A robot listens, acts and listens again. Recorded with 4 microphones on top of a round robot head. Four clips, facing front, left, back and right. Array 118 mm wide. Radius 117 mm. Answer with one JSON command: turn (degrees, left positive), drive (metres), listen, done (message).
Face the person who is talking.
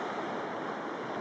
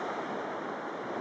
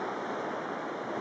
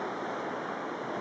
{"listen": true}
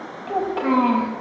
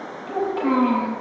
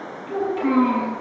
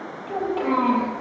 {"done": "Found it: a child speaking, straight ahead, 2 to 4 m away."}